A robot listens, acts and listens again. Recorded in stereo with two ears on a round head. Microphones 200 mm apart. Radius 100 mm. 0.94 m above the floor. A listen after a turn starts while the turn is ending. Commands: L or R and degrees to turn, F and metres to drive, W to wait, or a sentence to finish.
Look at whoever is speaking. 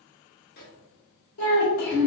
L90
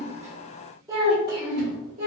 R30
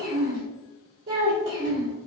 R45
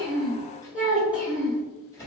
L10
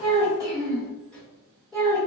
Facing the child speaking, 1 to 2 m away.